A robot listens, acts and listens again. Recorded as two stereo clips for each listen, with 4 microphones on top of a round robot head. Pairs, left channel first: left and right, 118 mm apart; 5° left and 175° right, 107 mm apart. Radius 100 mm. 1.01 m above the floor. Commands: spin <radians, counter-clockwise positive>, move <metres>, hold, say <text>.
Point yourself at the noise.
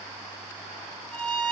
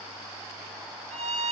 spin 2.97
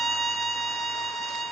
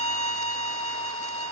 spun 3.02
say Facing the violin.